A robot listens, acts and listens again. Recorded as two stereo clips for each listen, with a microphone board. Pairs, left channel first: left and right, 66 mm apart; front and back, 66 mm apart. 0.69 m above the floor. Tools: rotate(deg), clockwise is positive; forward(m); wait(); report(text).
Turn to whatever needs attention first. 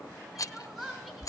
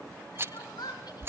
report("Found it: crying, straight ahead, 2 to 4 m away.")